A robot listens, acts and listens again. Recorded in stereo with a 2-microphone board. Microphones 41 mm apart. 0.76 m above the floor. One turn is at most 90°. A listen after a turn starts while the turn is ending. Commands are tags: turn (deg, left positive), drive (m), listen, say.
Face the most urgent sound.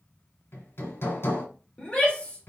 <turn deg="30"/>
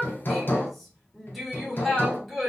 <say>Facing the shout.</say>